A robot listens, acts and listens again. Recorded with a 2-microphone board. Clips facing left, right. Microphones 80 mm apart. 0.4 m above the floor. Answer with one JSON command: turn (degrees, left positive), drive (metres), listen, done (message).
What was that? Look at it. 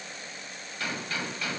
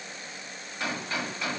{"turn": -25}
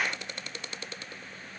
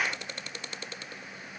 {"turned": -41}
{"listen": true}
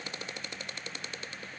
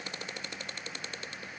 {"done": "I heard a gunshot, but can't make it out now. It was about 15° left or 115° right."}